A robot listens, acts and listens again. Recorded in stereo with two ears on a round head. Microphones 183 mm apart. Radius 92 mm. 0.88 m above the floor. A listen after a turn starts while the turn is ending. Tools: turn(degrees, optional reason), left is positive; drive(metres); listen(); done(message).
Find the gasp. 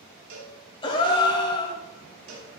turn(degrees=25, reason="The gasp: about 25° left or 155° left.")
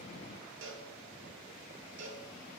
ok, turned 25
listen()
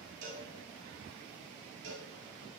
done("I heard a gasp, but can't make it out now. It was about straight ahead or 130° left.")